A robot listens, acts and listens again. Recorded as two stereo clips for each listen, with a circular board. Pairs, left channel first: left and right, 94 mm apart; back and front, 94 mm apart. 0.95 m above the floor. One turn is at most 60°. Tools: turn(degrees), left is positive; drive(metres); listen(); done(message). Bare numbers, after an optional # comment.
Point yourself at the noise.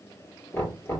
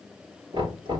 # The knocking: 25° left.
turn(25)
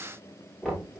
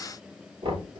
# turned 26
done("Found it: knocking, straight ahead.")